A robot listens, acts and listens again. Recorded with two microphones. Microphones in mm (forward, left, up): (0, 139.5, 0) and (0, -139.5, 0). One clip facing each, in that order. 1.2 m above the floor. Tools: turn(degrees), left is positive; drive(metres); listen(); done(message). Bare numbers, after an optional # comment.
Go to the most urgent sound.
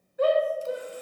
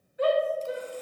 # The shout: about 50° left or 130° left.
turn(50)
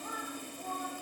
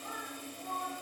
# So it is at 75° left.
turn(75)
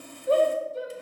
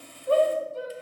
# The shout is now 20° left.
turn(20)
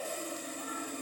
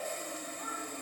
listen()
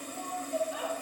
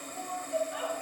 drive(1.0)
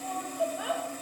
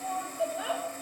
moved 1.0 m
drive(1.0)
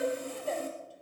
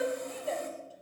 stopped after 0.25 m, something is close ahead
done("Arrived at the shout, straight ahead.")